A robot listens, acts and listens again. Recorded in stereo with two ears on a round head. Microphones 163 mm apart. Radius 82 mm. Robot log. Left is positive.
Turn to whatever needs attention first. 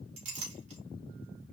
cmd idle
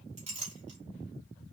cmd idle
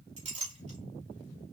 end: I can't make out anything urgent, only a clink.